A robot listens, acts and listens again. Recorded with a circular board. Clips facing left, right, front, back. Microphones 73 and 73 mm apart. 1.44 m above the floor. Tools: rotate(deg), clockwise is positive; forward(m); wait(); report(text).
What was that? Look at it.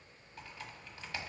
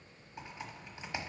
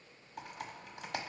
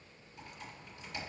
rotate(20)
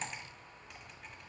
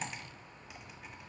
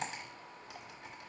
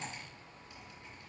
report("Facing the typing on a keyboard, 1 to 2 m away.")